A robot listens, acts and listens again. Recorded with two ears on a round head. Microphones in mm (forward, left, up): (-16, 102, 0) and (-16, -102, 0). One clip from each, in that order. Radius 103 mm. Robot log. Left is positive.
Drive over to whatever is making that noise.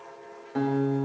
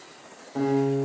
note: The guitar: about 70° left or 110° left.
cmd yaw +70
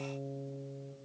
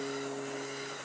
note: So it is at 30° left.
cmd yaw +30
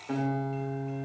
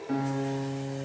cmd fwd 1.0
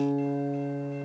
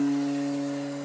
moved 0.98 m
note: The guitar is now 10° right.
cmd yaw -10
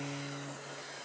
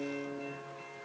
cmd fwd 1.0
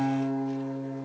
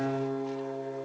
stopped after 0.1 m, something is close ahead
end: Arrived at the guitar, straight ahead.